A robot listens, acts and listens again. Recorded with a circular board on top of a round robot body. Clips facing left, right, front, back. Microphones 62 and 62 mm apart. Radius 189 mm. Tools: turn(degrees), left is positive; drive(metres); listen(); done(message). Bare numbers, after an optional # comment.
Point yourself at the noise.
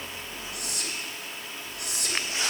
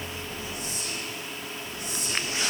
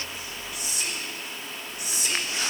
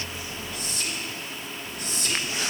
# The whispering: 85° left.
turn(85)
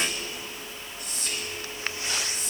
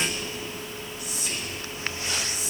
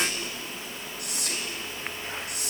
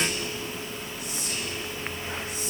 done("Found it: whispering, straight ahead, 1 to 2 m away.")